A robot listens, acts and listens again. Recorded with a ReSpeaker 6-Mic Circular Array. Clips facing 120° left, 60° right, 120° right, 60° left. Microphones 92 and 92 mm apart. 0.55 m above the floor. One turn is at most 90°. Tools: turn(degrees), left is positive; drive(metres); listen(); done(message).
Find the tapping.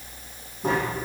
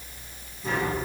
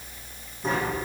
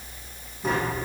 turn(degrees=90)
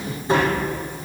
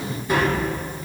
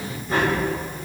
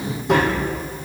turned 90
turn(degrees=55)
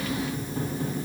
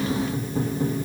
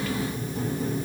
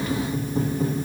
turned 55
done("Facing the tapping.")